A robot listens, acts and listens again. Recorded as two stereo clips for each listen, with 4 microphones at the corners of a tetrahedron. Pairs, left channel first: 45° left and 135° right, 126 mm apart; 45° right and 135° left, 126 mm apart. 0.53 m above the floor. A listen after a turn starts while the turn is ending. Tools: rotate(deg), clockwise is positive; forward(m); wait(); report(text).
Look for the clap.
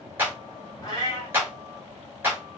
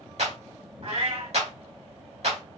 rotate(-155)
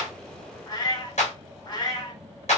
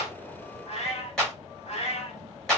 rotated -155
rotate(-40)
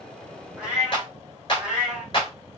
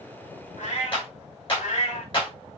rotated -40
report("Found it: a clap, straight ahead.")